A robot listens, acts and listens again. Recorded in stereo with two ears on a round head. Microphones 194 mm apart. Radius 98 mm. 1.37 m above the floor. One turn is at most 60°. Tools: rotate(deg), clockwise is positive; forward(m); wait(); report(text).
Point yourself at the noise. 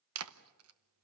rotate(60)
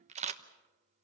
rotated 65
rotate(30)
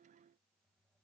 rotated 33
wait()
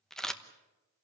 report("Facing the camera shutter.")